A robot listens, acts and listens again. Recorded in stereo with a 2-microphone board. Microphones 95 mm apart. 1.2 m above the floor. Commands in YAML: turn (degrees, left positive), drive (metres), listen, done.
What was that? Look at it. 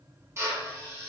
turn: -30
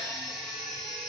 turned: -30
listen: true
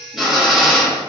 done: "Found it: a drill, straight ahead, under 1 m away."